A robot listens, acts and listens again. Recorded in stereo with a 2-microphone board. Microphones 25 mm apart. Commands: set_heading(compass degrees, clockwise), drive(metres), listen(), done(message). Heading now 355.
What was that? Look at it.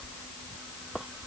listen()
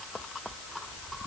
listen()
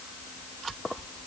done("I can't make out anything.")